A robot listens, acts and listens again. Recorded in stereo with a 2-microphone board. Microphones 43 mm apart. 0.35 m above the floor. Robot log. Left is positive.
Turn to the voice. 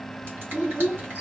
note: The child speaking: about 60° right or 120° right.
cmd yaw -60
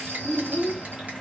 note: So it is at 20° right.
cmd yaw -20
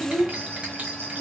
note: The child speaking is now 20° right.
cmd yaw -20
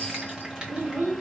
note: The child speaking is now 35° right.
cmd yaw -35
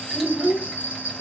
note: The child speaking is now 35° right.
cmd yaw -35
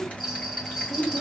note: The child speaking is now 10° right.
cmd yaw -10
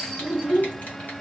end: Facing the child speaking, 1 to 2 m away.